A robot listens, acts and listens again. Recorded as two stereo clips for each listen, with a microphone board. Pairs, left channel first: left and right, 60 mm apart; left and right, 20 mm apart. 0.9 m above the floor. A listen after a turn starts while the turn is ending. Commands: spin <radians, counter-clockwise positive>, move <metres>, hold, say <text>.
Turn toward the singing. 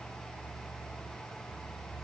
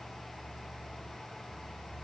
hold
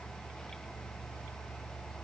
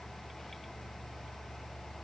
hold
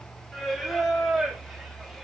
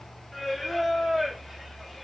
spin 0.52
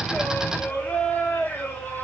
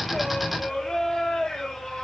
spin 2.53
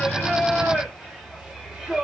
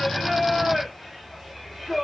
spin -0.26
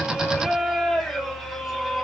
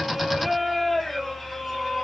say Found it: singing, straight ahead, 1 to 2 m away.